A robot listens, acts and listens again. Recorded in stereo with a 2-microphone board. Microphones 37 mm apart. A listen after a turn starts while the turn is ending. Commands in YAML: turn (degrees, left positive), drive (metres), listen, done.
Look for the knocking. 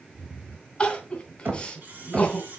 turn: -55
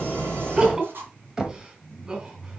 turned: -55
turn: -15
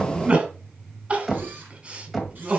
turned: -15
done: "Found it: knocking, straight ahead."